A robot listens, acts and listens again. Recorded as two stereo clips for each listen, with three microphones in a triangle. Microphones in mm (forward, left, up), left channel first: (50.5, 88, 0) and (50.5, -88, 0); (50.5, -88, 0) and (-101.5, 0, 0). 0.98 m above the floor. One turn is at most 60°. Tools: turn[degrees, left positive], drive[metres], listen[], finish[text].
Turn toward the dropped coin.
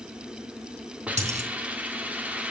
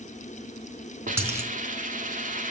Thought: The dropped coin: 135° right.
Action: turn[-60]
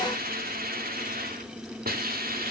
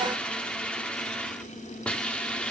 Thought: Nothing new. It was at 75° right.
Action: turn[-60]
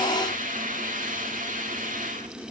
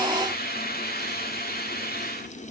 Thought: Nothing new. It was at 15° right.
Action: turn[-15]
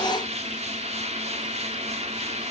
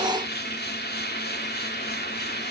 Action: finish[I heard a dropped coin from this way, but can't make it out now.]